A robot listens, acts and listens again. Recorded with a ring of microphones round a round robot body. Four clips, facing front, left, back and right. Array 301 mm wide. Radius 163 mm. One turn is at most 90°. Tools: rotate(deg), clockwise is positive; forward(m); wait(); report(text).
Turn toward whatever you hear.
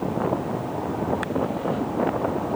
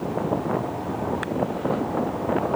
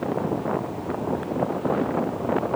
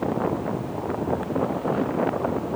wait()
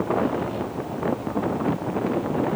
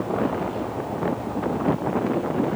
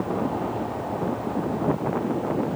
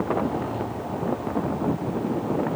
wait()
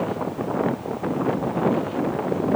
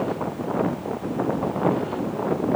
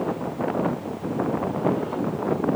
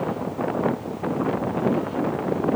report("I can't make out anything to turn to.")